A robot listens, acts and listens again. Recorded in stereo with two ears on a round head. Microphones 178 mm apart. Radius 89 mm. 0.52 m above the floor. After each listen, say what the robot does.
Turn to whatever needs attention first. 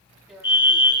Turn 25° left.
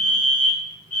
Turn 125° left.
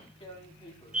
Facing the fire alarm, 2 to 4 m away.